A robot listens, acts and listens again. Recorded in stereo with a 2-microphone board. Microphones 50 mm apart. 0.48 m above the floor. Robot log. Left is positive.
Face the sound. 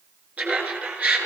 note: The laughter: about 35° right or 145° right.
cmd yaw -35
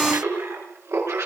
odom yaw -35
note: So it is at 105° right.
cmd yaw -105
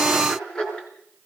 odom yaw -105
note: The laughter is now 15° left.
cmd yaw +15
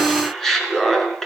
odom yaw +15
note: The laughter is now 10° left.
cmd yaw +10
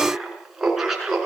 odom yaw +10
end: Facing the laughter, over 4 m away.